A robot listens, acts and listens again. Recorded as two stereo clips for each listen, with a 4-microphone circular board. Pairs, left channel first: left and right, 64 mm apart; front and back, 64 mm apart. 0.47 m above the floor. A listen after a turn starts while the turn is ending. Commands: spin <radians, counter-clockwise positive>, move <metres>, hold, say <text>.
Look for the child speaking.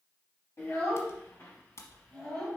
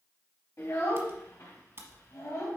spin 0.52
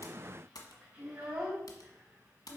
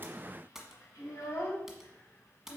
spin -0.52
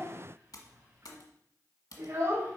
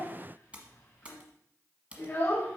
spin -0.87
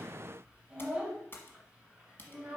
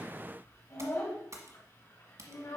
spin -0.26
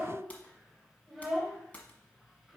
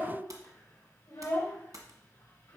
say Found it: a child speaking, straight ahead, 2 to 4 m away.